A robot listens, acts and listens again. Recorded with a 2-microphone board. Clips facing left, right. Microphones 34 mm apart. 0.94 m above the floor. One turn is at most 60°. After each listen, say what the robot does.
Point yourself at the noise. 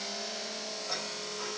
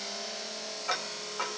Turn 60° right.
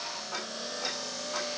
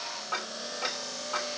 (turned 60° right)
Turn 35° right.
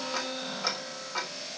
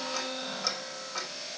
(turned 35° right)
Turn 25° left.
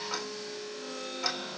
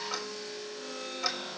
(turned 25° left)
Facing the ticking, 2 to 4 m away.